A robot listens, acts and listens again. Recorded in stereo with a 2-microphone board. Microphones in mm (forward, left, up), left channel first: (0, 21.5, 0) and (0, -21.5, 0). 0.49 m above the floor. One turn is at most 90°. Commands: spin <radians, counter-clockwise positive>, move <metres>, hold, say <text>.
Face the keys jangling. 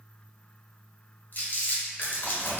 spin 1.13
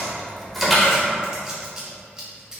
say Facing the keys jangling, 1 to 2 m away.